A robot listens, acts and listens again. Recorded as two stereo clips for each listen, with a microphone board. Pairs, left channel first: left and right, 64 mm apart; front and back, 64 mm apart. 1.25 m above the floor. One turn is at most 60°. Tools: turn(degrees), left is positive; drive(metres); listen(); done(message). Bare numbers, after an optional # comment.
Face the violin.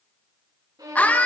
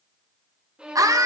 # The violin: 105° right.
turn(-60)
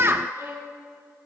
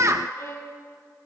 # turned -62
# The violin is now 45° right.
turn(-45)
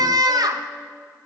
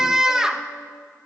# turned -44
listen()
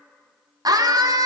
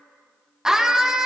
listen()
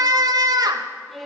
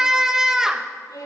done("Found it: a violin, straight ahead, 2 to 4 m away.")